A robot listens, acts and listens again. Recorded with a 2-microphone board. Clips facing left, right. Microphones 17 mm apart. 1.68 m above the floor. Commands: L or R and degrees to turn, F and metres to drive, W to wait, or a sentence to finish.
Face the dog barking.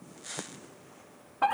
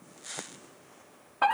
W
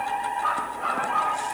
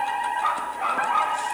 R45
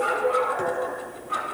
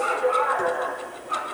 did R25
R20
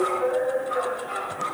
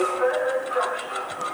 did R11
Facing the dog barking, over 4 m away.